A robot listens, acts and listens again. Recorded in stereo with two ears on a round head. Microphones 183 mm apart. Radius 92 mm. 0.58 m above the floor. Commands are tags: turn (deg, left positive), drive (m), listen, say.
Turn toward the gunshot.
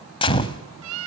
<turn deg="25"/>
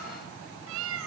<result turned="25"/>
<listen/>
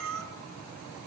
<say>I heard a gunshot, but can't make it out now. It was about straight ahead or 130° left.</say>